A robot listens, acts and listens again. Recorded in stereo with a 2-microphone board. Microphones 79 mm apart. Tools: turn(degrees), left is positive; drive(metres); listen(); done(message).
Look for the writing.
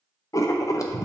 turn(degrees=40)
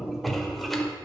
done("Found it: writing, straight ahead, under 1 m away.")